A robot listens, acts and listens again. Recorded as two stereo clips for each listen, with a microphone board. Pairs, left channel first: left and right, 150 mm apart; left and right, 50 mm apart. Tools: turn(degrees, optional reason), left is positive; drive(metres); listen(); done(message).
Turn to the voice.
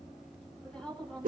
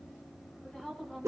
turn(degrees=30)
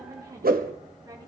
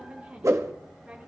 turn(degrees=-25, reason="So it is at 25° right.")
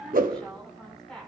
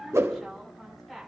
done("Found it: a woman speaking, straight ahead, over 4 m away.")